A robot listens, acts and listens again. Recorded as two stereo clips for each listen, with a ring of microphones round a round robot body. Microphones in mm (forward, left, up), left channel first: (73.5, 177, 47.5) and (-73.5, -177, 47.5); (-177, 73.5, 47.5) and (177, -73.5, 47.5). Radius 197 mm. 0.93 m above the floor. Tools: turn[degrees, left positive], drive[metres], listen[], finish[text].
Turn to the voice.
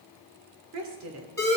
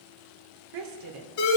Thought: The woman speaking: 60° right.
Action: turn[-60]
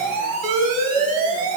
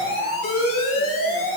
Action: listen[]
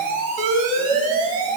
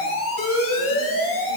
Action: listen[]
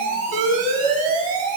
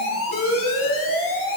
Action: finish[Facing where the woman speaking came from. I can't hear it now.]